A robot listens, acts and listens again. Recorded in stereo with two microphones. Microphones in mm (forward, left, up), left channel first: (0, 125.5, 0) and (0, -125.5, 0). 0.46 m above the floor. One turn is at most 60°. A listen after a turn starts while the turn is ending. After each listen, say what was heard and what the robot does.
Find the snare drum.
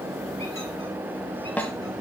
Turn 30° left.
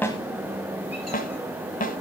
So it is at 145° left. Turn 60° left.
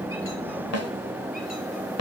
The snare drum is now 80° left. Turn 60° left.
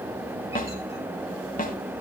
The snare drum is now 35° left. Turn 35° left.
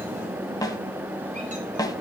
The snare drum is now 15° left. Turn 15° left.
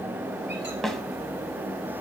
Found it: a snare drum, straight ahead, 1 to 2 m away.